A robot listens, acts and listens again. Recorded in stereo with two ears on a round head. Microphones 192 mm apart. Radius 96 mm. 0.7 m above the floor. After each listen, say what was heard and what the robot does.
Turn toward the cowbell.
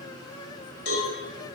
The cowbell: about 65° left or 115° left. Turn 65° left.
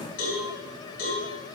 So it is at 50° left. Turn 50° left.
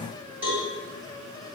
Found it: a cowbell, straight ahead.